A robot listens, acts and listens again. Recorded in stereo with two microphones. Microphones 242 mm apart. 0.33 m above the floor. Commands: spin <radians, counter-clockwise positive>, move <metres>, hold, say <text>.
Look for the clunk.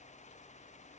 hold
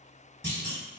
spin -0.79
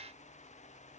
hold
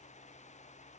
say I heard a clunk, but can't make it out now. It was about straight ahead or 90° right.